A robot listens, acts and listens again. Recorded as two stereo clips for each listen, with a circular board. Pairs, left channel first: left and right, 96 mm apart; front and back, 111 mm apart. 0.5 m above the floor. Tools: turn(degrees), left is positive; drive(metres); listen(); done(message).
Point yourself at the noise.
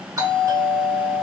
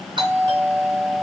turn(degrees=-145)
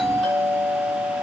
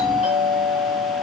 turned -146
done("Found it: a doorbell, straight ahead.")